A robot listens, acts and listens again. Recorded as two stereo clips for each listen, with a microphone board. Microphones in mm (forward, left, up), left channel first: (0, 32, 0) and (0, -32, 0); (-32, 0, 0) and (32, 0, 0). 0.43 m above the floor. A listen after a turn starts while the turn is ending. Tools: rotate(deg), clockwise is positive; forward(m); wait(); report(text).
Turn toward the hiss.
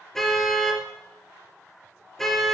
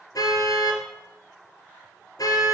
wait()
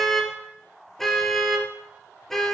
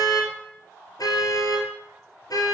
wait()
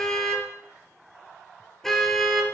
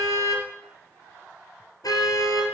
report("I can't make out a hiss, only a car horn.")